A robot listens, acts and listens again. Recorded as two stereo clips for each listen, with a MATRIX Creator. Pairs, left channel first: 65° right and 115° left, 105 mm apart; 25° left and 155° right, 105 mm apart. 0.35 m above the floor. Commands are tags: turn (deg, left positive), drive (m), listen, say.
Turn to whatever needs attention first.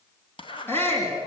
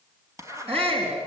<turn deg="-135"/>
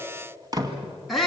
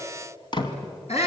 <turn deg="20"/>
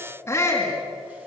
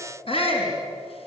<say>Facing the shout, over 4 m away.</say>